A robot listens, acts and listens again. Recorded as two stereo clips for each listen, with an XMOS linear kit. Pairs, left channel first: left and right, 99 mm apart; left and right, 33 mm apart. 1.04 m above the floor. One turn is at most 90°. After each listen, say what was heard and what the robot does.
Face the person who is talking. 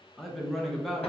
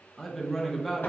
Turn 30° left.
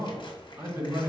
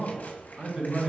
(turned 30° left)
So it is at 30° right. Turn 30° right.
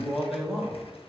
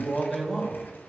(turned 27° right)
Found it: a man speaking, straight ahead, 1 to 2 m away.